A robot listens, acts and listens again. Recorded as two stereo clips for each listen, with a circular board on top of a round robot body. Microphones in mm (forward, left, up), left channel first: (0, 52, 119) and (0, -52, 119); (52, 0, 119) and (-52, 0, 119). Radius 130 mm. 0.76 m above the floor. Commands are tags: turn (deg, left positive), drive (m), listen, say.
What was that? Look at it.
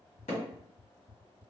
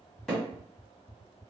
<turn deg="90"/>
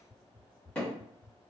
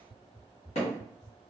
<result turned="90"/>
<turn deg="10"/>
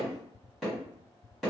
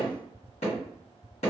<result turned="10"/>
<say>Found it: hammering, straight ahead.</say>